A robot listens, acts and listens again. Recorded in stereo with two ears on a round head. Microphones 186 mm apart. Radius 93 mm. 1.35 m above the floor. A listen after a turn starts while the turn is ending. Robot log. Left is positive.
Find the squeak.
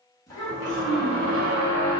note: The squeak: about 20° right or 160° right.
cmd yaw -20
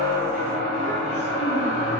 end: Found it: a squeak, straight ahead.